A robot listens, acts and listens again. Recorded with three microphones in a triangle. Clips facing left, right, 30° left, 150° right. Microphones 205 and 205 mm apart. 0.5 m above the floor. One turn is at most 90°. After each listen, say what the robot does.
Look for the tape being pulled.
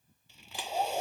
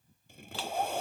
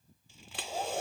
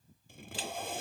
Turn 90° right.
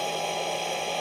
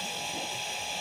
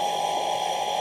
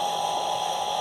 Turn 35° right.
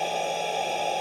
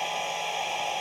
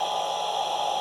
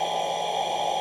Keep listening.
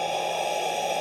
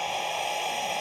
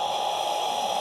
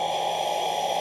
Facing where the tape being pulled came from. I can't hear it now.